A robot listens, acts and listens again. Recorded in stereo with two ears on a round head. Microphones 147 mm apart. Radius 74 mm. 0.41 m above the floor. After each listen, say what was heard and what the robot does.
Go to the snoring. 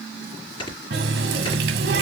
The snoring: about 30° left or 150° left. Turn 30° left.
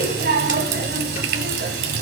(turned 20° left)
Keep listening.
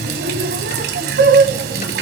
Keep listening.
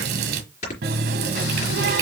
So it is at 135° left. Turn 135° left.
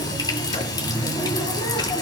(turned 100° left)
Nothing new. It was at 35° left. Turn 35° left.
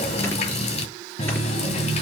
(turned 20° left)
Nothing new. It was at 15° left. Turn 15° left.
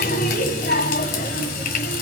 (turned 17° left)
Facing where the snoring came from. I can't hear it now. I did not reach it.